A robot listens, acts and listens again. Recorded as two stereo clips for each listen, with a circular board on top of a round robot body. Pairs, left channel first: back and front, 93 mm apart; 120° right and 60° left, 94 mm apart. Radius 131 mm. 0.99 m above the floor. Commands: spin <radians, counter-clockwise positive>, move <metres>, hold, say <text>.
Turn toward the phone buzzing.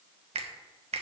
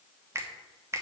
hold
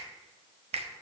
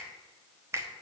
hold
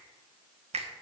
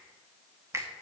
say I can't make out a phone buzzing to turn to.